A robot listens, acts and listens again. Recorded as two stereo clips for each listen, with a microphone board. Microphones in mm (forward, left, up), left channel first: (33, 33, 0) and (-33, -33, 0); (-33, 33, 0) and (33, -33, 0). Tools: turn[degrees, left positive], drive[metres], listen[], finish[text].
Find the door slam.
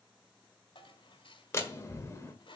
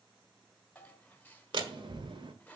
Thought: The door slam: 15° right.
Action: turn[-15]
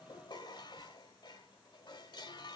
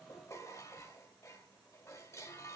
Action: finish[Facing where the door slam came from. I can't hear it now.]